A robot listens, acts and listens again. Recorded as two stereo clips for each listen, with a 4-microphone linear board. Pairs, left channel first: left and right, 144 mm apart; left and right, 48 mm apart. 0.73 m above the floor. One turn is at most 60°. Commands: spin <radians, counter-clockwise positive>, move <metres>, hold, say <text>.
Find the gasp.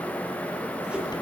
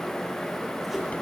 hold
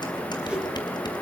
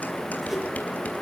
hold
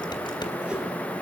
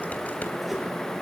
say I can't make out a gasp to turn to.